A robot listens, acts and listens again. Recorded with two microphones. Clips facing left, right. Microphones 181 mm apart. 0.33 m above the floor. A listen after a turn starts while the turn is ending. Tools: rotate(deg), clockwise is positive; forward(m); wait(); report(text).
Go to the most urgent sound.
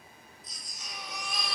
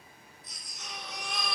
rotate(60)
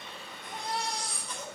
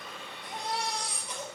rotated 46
rotate(10)
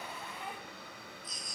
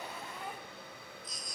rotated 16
forward(1.0)
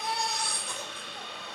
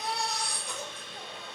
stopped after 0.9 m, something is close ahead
report("Something is in my way. I am facing the baby crying but have not reached it.")